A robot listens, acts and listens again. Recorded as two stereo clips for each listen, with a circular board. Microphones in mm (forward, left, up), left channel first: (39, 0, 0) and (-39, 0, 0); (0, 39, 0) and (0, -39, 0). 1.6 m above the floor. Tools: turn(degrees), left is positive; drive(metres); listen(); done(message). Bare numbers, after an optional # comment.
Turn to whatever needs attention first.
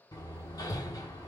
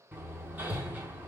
listen()
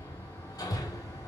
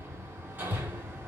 listen()
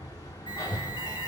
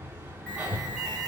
# The alarm: 20° left.
turn(20)
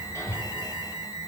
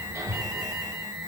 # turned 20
done("Facing the alarm.")